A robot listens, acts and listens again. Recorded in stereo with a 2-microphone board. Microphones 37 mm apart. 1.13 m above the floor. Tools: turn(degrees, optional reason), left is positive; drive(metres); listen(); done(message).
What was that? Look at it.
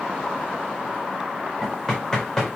turn(degrees=30)
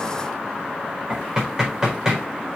turn(degrees=-15, reason="So it is at 15° right.")
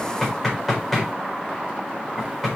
done("Facing the knocking, over 4 m away.")